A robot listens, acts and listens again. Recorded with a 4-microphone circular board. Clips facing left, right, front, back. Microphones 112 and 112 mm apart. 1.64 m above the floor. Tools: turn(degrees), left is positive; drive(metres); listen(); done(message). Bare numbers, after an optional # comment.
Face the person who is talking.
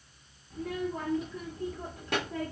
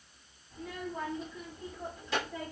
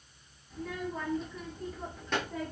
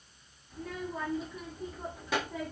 # The child speaking: 95° left.
turn(95)
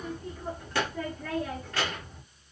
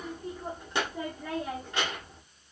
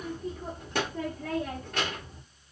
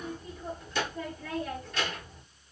# The child speaking is now 20° right.
turn(-20)
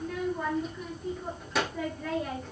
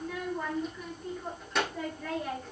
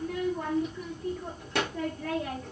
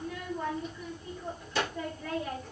done("Facing the child speaking.")